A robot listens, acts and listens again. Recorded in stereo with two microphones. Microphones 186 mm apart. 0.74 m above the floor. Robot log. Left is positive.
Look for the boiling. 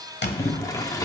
note: The boiling: about 20° left or 160° left.
cmd yaw +20
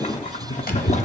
note: So it is at 140° left.
cmd yaw +140
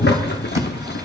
note: The boiling is now 65° left.
cmd yaw +65
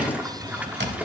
note: The boiling is now 10° right.
cmd yaw -10
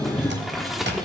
end: Facing the boiling.